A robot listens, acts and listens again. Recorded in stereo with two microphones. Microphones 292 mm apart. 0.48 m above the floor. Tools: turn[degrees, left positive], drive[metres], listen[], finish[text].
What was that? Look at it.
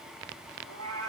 Thought: The cat meowing: about 75° right or 105° right.
Action: turn[-75]
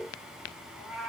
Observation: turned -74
Action: finish[Facing the cat meowing, 1 to 2 m away.]